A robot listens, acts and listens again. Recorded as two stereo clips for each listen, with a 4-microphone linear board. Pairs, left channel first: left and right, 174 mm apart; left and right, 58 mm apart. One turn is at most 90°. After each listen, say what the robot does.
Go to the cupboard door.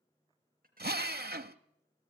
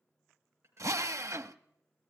Keep listening.
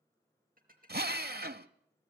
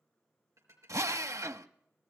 Keep listening.
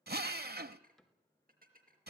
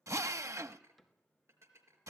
Turn 30° left.
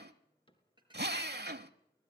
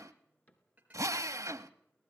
Turn 90° left.
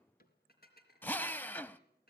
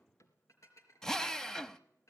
Turn 60° left.
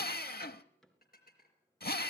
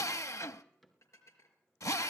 Drive 1.0 m forward.
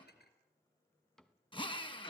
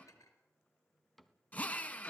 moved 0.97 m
Drive 1.0 m forward.
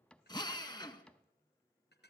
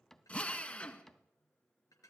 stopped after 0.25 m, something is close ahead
Arrived at the cupboard door, straight ahead.